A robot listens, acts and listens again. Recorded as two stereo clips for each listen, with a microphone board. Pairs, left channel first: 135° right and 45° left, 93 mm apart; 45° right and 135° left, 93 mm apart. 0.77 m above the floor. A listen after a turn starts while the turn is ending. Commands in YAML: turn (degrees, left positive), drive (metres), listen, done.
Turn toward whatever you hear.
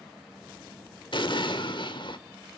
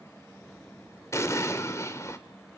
turn: -105
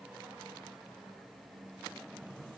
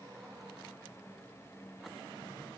done: "Facing where the explosion came from. I can't hear it now."